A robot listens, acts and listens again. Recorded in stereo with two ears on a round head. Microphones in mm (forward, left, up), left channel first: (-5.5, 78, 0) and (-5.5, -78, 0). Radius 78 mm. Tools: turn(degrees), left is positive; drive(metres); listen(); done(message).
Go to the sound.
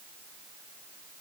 listen()
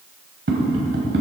turn(degrees=-90)
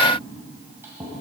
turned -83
listen()
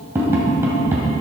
turn(degrees=-15)
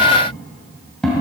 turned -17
drive(metres=1.0)
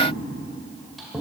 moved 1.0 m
drive(metres=1.0)
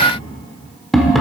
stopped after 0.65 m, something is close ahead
done("Arrived at the tapping, straight ahead.")